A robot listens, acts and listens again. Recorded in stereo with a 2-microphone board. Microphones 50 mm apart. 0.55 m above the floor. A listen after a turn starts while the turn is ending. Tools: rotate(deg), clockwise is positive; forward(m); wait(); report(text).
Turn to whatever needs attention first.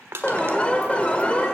rotate(-20)
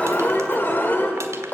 rotate(-135)
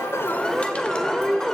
rotate(-15)
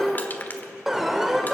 report("Found it: an alarm, straight ahead.")